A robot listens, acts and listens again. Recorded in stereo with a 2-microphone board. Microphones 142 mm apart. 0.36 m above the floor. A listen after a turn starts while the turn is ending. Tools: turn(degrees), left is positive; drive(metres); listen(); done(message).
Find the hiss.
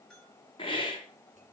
turn(degrees=40)
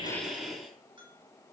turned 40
done("Facing the hiss, 2 to 4 m away.")